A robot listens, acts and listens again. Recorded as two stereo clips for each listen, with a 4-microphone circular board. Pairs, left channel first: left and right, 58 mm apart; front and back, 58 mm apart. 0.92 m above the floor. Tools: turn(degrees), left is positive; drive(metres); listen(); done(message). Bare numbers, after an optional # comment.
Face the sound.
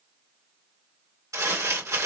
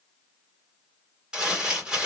# The crumpling: 110° right.
turn(-110)
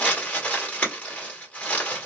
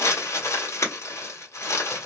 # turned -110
# The crumpling is now 20° left.
turn(20)
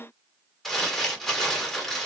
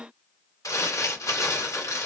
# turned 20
done("Facing the crumpling.")